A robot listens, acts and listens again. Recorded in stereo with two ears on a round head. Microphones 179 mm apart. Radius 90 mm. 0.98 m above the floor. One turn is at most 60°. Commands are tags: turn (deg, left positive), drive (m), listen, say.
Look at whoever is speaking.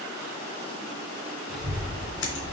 <turn deg="-30"/>
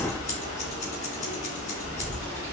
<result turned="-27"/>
<turn deg="20"/>
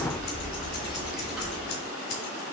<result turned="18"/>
<say>Facing the child speaking, over 4 m away.</say>